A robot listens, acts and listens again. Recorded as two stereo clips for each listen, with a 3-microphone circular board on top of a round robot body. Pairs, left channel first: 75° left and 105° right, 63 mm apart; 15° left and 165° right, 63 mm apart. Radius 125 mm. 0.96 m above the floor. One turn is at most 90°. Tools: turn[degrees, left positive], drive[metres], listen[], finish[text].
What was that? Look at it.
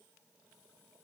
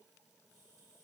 Action: listen[]
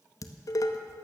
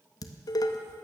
Thought: The dishes clattering: 40° left.
Action: turn[40]
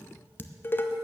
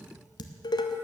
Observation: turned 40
Thought: The dishes clattering is now 15° left.
Action: turn[15]
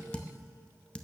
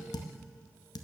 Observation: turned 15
Action: finish[Facing the dishes clattering, under 1 m away.]